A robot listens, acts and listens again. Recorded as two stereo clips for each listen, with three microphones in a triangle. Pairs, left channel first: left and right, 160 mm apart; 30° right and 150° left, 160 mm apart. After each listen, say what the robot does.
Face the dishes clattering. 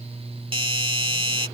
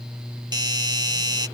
Keep listening.
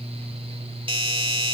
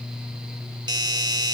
Keep listening.
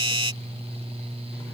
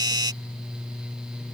I can't make out dishes clattering, only a doorbell.